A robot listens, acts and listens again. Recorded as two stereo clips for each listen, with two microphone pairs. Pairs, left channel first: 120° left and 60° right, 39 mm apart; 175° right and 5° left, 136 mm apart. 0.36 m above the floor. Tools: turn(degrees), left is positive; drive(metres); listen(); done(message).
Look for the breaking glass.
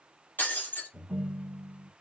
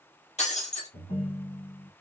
turn(degrees=155)
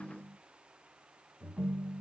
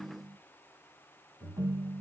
done("I heard breaking glass from this way, but can't make it out now.")